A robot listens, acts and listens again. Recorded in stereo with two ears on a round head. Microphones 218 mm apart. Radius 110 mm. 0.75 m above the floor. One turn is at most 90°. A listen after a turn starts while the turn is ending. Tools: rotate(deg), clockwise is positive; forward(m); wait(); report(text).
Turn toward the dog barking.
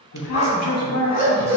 rotate(-40)
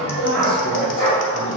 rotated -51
rotate(-15)
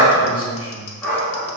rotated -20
rotate(-10)
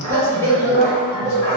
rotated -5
rotate(-15)
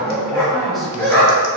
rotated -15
report("Facing the dog barking.")